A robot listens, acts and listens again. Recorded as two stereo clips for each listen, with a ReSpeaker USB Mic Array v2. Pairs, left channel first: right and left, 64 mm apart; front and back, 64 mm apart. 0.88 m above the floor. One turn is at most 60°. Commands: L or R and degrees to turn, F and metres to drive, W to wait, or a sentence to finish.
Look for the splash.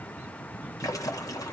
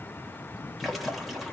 R60
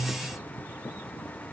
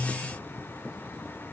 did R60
R30
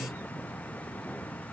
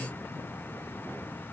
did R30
Facing where the splash came from. I can't hear it now.